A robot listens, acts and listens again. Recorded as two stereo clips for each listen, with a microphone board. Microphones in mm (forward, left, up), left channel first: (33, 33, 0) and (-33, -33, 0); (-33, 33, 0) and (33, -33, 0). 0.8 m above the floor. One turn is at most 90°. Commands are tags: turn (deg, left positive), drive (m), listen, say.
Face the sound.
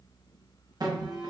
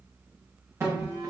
<turn deg="-90"/>
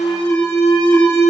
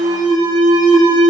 <turn deg="-15"/>
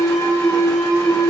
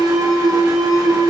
<say>Found it: an alarm, straight ahead, under 1 m away.</say>